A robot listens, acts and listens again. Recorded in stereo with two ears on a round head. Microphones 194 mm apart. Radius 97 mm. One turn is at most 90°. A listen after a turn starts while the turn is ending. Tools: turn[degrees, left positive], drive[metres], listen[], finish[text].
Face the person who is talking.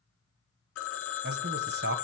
Thought: The man speaking: about 50° right or 130° right.
Action: turn[-50]
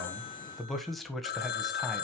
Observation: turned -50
Action: finish[Found it: a man speaking, straight ahead.]